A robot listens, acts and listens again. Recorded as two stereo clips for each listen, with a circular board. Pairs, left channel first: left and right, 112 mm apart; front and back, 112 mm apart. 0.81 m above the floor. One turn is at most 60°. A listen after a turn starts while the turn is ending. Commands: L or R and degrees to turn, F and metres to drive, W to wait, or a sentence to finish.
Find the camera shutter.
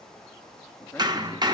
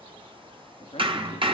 W
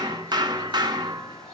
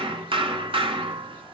W
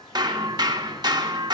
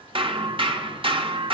I can't make out a camera shutter to turn to.